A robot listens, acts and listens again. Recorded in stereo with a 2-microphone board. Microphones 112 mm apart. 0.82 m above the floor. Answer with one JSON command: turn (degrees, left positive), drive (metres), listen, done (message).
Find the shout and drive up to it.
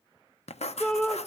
{"turn": 30}
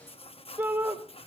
{"turn": -25}
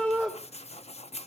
{"drive": 1.0}
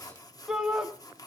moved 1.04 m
{"drive": 1.0}
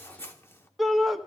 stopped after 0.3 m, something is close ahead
{"done": "Arrived at the shout, straight ahead."}